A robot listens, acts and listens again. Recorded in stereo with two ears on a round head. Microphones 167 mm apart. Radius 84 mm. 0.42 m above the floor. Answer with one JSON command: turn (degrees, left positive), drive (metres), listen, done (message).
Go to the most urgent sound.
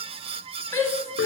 {"turn": 15}
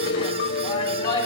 {"turn": 155}
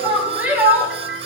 {"turn": -10}
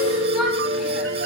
{"listen": true}
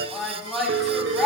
{"drive": 1.0}
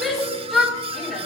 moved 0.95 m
{"drive": 1.0}
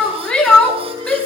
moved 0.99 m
{"turn": 10}
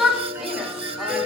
{"drive": 1.0}
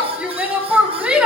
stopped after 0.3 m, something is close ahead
{"turn": -10}
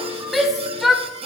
{"done": "Arrived at the shout, straight ahead."}